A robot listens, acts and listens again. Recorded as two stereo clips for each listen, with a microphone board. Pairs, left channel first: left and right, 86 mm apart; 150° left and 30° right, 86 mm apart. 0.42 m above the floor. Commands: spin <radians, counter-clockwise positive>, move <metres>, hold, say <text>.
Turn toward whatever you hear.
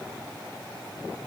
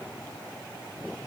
hold
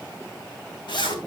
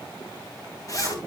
spin 1.83
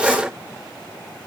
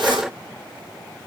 hold
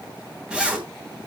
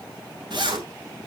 spin -0.17
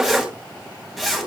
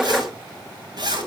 say Facing the zipper.